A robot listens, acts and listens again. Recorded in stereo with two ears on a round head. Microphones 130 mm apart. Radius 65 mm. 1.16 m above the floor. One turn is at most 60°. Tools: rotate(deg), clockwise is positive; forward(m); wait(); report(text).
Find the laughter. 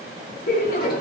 rotate(-55)
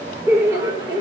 rotate(30)
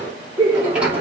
rotate(30)
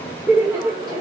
rotate(20)
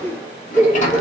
rotate(15)
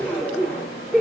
report("Found it: laughter, straight ahead.")